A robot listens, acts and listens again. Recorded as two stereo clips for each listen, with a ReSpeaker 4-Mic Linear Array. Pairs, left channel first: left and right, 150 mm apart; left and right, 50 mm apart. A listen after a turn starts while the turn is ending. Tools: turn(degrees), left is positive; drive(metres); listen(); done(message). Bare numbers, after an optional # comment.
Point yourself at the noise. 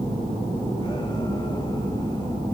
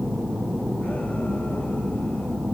listen()
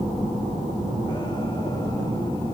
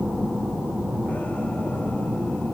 listen()
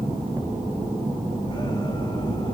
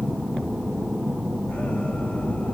done("I can't make out anything.")